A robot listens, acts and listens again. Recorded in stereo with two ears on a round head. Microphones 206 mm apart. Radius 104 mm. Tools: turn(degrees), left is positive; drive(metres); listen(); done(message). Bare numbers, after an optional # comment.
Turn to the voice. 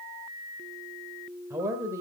turn(-30)
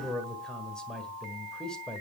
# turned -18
done("Found it: a man speaking, straight ahead.")